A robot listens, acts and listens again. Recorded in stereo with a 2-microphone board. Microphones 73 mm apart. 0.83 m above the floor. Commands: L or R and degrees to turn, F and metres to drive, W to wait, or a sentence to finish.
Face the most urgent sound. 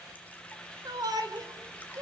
R60
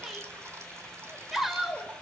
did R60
Found it: a shout, straight ahead, 2 to 4 m away.